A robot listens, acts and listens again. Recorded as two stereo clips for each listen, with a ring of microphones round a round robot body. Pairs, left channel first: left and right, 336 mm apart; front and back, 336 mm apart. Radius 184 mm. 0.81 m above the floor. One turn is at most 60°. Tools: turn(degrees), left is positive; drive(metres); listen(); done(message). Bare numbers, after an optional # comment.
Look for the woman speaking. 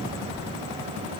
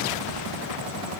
listen()
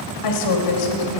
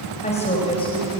# The woman speaking: 80° left.
turn(60)
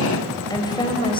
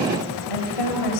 # The woman speaking is now 15° left.
turn(15)
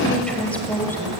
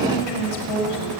done("Facing the woman speaking.")